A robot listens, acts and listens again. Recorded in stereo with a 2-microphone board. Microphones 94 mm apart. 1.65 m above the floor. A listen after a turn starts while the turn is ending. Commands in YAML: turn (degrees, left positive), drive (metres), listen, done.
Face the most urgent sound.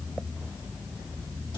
listen: true
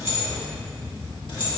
listen: true
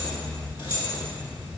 done: "I can't make out anything urgent, only keys jangling."